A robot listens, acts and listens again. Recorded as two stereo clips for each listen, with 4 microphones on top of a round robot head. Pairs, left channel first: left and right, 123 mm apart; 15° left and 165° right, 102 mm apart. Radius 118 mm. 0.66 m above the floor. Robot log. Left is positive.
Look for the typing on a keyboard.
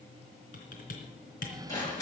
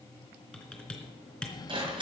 note: The typing on a keyboard: 95° left.
cmd yaw +95
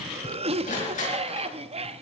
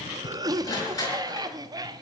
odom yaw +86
note: Nothing new. It was at 10° left.
cmd yaw +10
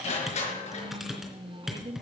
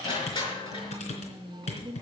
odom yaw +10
end: Found it: typing on a keyboard, straight ahead.